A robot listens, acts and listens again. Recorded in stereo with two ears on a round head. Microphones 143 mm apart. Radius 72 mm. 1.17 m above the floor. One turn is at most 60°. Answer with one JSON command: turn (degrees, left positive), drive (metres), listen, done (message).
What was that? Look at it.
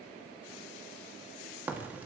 {"turn": -30}
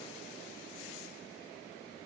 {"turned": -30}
{"listen": true}
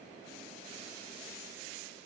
{"done": "I heard a crack, but can't make it out now. It was about 20° left or 140° right."}